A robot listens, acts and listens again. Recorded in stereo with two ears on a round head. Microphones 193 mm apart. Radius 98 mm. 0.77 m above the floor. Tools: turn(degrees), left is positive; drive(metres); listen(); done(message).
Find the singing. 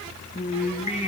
turn(degrees=35)
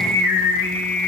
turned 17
turn(degrees=45)
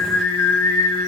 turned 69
turn(degrees=75)
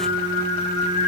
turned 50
turn(degrees=30)
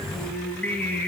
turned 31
turn(degrees=10)
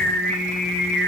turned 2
done("Found it: singing, straight ahead, 2 to 4 m away.")